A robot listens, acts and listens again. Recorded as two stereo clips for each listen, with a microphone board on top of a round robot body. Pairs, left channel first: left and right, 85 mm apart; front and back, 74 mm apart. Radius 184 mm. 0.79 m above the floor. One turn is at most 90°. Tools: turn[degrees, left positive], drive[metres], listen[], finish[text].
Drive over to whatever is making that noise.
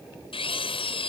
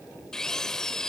Thought: The drill: 85° left.
Action: turn[85]
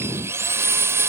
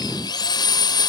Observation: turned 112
Thought: The drill is now 30° right.
Action: turn[-30]
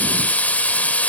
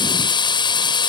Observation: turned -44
Thought: The drill is now 15° left.
Action: turn[15]
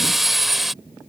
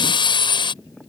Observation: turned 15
Action: drive[1.0]
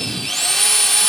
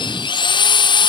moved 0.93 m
Action: drive[1.0]
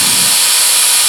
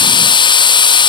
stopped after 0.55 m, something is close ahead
Action: finish[I am next to the drill.]